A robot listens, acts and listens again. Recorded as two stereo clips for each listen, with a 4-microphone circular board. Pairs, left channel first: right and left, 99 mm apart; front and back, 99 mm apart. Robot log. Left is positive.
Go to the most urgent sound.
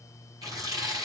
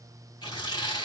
cmd idle
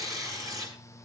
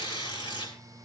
cmd idle
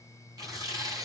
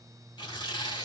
end: I can't make out anything urgent to turn to.